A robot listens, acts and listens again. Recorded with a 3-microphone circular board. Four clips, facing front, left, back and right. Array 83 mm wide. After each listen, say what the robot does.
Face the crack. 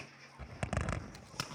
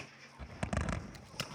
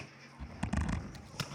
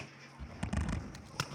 Turn 60° right.
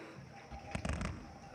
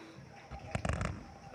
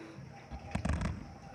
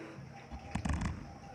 Facing where the crack came from. I can't hear it now.